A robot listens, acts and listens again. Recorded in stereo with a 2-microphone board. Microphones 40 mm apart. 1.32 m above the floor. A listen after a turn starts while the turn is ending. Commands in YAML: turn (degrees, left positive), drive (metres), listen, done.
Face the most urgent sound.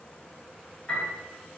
listen: true
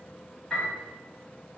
listen: true
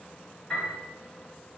done: "I can't make out anything urgent to turn to."